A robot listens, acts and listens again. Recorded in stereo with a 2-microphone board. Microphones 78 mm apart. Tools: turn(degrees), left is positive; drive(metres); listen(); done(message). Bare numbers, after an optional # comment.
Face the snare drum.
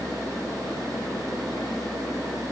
listen()
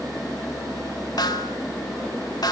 # The snare drum: about 60° left or 120° left.
turn(60)
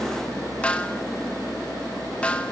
# So it is at 20° left.
turn(20)
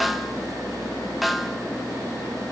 done("Found it: a snare drum, straight ahead, 1 to 2 m away.")